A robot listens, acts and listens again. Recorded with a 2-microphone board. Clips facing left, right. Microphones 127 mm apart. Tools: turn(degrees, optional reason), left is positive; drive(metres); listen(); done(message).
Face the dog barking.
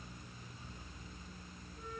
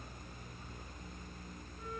listen()
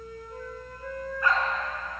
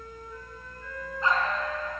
turn(degrees=-25, reason="The dog barking: about 25° right or 155° right.")
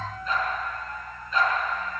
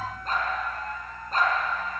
turn(degrees=-130, reason="So it is at 130° right.")
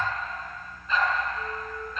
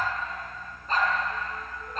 turn(degrees=-45, reason="The dog barking is now 45° right.")
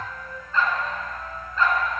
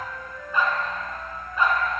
turn(degrees=-15, reason="The dog barking is now 15° right.")
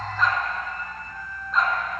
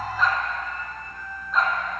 done("Facing the dog barking.")